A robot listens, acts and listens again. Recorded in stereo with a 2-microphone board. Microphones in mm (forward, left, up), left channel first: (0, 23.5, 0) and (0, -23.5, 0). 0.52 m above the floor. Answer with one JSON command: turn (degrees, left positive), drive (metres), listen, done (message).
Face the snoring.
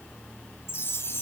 {"listen": true}
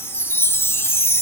{"listen": true}
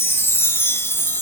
{"done": "I can't make out snoring to turn to."}